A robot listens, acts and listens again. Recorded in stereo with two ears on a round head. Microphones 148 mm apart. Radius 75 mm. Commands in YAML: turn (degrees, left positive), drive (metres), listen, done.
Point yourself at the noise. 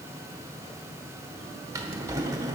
turn: -20
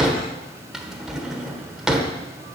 done: "Found it: a drawer, straight ahead."